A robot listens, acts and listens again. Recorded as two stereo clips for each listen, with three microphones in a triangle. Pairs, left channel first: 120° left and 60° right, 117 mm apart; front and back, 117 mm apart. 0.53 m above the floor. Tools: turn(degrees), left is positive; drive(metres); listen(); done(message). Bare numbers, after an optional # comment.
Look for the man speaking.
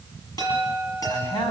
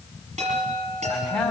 # The man speaking: 85° left.
turn(85)
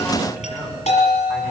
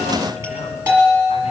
listen()
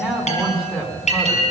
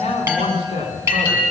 # The man speaking is now 25° left.
turn(25)
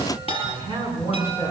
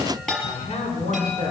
done("Facing the man speaking, over 4 m away.")